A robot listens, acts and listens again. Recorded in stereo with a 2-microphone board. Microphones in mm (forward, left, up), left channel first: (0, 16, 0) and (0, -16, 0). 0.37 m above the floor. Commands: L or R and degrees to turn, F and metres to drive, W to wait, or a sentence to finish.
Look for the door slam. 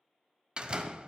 R30
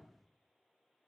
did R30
W
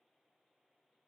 I heard a door slam, but can't make it out now. It was about straight ahead or 120° right.